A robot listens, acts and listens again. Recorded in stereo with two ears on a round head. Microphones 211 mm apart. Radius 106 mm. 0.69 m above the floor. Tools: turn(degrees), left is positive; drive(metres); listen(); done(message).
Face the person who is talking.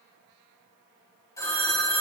listen()
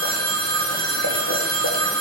listen()
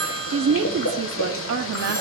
turn(degrees=-55)
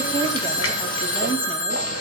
listen()
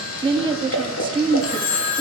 turn(degrees=-25)
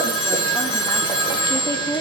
turn(degrees=20)
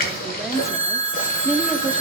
done("Found it: a woman speaking, straight ahead, under 1 m away.")